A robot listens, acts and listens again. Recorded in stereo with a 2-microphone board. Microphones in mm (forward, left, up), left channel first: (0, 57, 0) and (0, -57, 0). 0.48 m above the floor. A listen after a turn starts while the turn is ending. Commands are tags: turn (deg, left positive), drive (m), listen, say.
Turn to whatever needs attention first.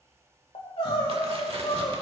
<turn deg="55"/>
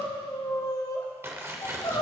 <turn deg="50"/>
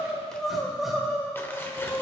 <say>Facing the crying.</say>